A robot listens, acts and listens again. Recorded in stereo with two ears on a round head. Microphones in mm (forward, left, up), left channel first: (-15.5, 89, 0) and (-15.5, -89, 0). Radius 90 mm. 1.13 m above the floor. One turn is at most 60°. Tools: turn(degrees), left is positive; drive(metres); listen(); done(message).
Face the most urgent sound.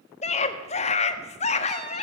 turn(degrees=35)
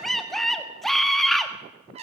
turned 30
done("Found it: a scream, straight ahead.")